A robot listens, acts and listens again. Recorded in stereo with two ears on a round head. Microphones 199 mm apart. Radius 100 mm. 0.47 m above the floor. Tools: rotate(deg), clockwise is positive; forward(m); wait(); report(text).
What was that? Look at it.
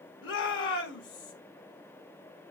rotate(-60)
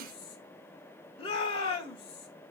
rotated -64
rotate(-30)
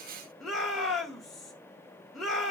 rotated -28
report("Facing the shout.")